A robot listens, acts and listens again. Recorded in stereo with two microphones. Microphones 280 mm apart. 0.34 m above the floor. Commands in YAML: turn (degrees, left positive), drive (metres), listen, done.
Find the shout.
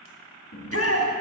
turn: 55
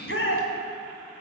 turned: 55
turn: 55
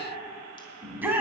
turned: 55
done: "Facing the shout."